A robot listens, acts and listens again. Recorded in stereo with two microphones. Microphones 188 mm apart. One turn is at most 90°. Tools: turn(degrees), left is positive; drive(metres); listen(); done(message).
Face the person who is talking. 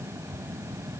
listen()
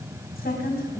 turn(degrees=55)
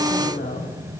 turn(degrees=70)
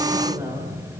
turn(degrees=-15)
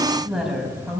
done("Found it: a woman speaking, straight ahead.")